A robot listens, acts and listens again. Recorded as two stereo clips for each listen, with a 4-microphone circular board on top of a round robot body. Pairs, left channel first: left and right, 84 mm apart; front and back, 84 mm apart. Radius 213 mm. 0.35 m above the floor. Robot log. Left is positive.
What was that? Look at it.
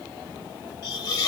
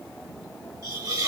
note: The hiss: 130° left.
cmd yaw +130
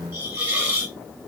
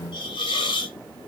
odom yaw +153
note: The hiss is now 20° right.
cmd yaw -20
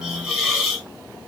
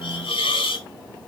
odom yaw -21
end: Found it: a hiss, straight ahead.